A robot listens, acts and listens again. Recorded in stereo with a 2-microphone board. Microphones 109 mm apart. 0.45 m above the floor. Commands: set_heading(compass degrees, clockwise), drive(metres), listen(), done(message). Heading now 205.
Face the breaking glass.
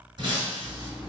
set_heading(250)
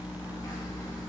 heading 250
listen()
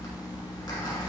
done("I heard breaking glass, but can't make it out now. It was about straight ahead or 90° right.")